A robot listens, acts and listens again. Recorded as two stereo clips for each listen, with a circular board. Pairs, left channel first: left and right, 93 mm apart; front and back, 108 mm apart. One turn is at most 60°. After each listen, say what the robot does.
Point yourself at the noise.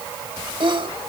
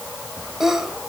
Turn 60° right.
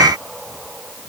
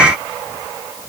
Turn 35° right.
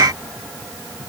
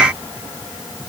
Facing where the sneeze came from. I can't hear it now.